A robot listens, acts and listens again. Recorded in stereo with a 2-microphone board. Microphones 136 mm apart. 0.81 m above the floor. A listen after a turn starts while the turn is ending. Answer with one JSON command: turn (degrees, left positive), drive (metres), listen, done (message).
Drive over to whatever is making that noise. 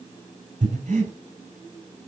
{"turn": -60}
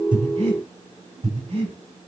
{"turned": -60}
{"turn": -55}
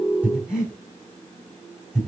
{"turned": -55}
{"drive": 1.0}
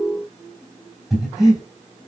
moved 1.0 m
{"drive": 1.0}
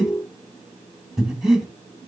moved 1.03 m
{"drive": 1.0}
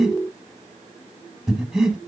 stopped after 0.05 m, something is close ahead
{"done": "I am next to the breathing."}